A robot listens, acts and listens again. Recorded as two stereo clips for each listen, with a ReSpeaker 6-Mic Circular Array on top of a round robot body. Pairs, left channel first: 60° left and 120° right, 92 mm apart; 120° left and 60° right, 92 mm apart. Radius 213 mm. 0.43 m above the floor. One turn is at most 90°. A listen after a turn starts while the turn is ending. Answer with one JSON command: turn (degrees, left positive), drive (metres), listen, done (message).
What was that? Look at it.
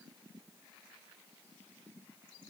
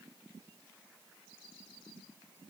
{"listen": true}
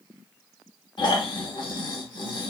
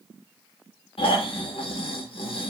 {"turn": 90}
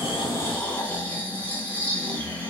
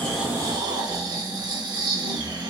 {"turn": -15}
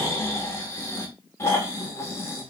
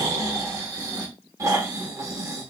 {"done": "Found it: snoring, straight ahead, under 1 m away."}